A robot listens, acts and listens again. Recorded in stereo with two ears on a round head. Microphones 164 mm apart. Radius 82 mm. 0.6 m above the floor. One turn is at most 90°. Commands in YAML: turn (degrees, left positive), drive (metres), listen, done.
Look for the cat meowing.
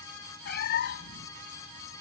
turn: 60
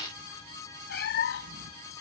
turn: 60
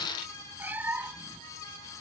turn: -10
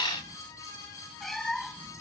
done: "Found it: a cat meowing, straight ahead."